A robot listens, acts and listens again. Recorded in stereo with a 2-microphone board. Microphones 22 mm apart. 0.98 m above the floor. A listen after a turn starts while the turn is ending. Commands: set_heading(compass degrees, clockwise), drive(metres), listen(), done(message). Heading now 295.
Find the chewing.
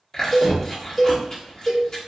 set_heading(265)
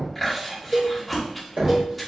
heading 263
done("Found it: chewing, straight ahead.")